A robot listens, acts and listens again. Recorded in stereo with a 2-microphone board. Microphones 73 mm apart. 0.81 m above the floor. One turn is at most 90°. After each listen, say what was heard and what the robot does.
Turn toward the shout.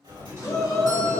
The shout: about 60° left or 120° left. Turn 60° left.
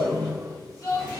So it is at 50° left. Turn 50° left.
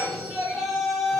Facing the shout.